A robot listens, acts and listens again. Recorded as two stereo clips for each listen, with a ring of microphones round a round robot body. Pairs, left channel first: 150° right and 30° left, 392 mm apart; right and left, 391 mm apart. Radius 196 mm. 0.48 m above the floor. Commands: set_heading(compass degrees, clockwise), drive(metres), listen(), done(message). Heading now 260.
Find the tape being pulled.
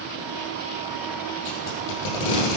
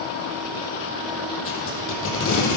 set_heading(50)
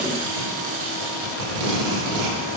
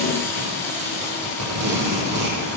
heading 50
set_heading(15)
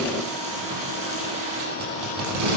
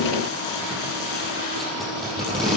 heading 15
done("Facing the tape being pulled, over 4 m away.")